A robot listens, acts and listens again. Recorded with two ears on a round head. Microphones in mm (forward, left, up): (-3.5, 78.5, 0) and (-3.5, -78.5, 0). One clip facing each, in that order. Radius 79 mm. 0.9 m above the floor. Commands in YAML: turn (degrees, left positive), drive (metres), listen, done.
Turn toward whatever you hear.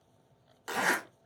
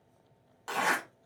turn: 30
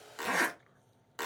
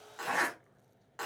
turn: 135
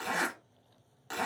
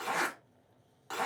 turn: 25
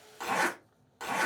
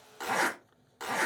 done: "Found it: a zipper, straight ahead."